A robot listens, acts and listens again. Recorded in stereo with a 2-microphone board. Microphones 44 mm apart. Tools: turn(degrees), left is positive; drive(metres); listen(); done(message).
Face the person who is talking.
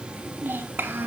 turn(degrees=-50)
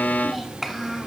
done("Facing the child speaking.")